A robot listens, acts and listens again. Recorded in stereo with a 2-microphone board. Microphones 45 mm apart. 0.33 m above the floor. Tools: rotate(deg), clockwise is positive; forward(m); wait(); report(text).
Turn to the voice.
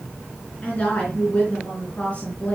rotate(-30)
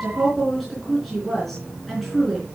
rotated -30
report("Facing the woman speaking.")